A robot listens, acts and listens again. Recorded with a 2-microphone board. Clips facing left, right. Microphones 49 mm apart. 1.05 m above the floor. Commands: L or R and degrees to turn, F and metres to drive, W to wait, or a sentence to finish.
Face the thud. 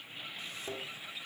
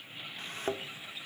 R60
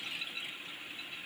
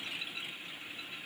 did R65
W
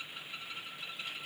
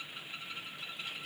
I heard a thud, but can't make it out now. It was about 5° left or 55° right.